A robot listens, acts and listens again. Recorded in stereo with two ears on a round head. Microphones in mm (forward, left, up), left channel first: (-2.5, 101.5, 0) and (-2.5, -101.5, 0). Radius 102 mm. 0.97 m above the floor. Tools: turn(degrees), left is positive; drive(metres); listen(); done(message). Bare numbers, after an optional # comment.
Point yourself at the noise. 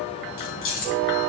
# The keys jangling: about 65° left or 115° left.
turn(65)
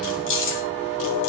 # So it is at 60° left.
turn(60)
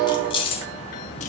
# The keys jangling is now 25° left.
turn(25)
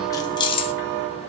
# The keys jangling is now 25° left.
turn(25)
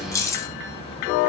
# The keys jangling is now 15° left.
turn(15)
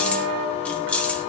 done("Facing the keys jangling, 1 to 2 m away.")